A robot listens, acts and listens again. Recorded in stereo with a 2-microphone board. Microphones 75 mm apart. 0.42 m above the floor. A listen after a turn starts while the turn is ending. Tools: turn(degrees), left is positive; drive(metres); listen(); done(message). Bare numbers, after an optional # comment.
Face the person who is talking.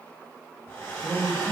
# The man speaking: about 55° right or 125° right.
turn(-55)
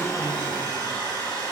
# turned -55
listen()
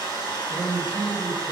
# So it is at 60° right.
turn(-60)
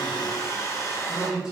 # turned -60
# The man speaking is now 10° right.
turn(-10)
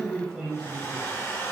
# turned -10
done("Facing the man speaking.")